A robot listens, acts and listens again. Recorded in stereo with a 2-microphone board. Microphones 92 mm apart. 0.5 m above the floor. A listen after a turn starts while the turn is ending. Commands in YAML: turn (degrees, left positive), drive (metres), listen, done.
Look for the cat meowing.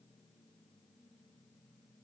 listen: true
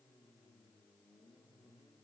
listen: true
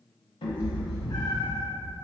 turn: 60
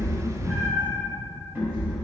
turn: -20
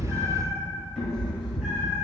done: "Facing the cat meowing, 1 to 2 m away."